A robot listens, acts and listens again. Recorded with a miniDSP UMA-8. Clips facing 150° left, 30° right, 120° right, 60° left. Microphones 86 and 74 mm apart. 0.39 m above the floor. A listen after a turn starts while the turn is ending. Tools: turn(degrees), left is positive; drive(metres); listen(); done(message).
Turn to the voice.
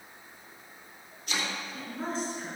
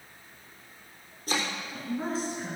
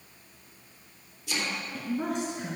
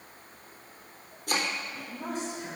turn(degrees=-120)
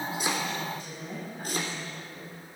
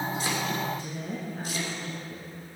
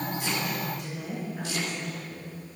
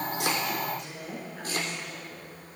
turn(degrees=-30)
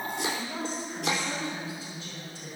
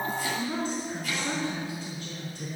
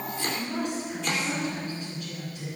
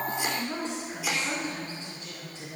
done("Facing the woman speaking, over 4 m away.")